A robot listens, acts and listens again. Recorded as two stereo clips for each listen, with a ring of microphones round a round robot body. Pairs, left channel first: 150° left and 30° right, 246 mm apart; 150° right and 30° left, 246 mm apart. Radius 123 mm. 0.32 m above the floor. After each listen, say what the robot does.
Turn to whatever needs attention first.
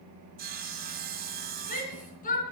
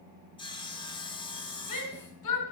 Turn 150° right.
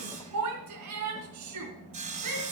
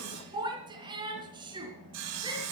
Turn 40° right.
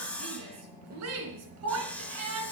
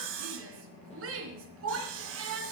Facing the shout.